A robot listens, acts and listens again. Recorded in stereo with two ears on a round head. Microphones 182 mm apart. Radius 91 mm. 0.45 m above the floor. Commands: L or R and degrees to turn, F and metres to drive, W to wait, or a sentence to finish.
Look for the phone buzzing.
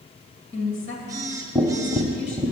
R15
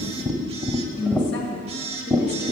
R150
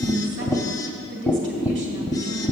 W
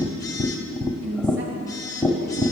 L20
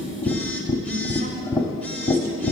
W
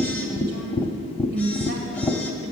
W
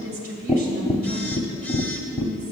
I heard a phone buzzing from this way, but can't make it out now.